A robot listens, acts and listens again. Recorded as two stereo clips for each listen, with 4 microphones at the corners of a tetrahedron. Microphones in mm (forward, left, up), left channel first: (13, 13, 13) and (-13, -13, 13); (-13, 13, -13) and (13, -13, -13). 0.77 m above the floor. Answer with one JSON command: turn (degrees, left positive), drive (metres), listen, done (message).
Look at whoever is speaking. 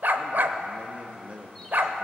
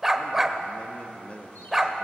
{"turn": 180}
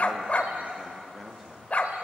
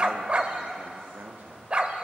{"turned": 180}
{"turn": -45}
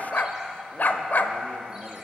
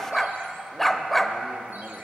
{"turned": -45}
{"listen": true}
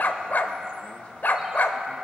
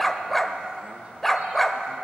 {"listen": true}
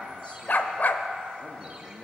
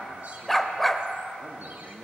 {"done": "Facing the man speaking, 1 to 2 m away."}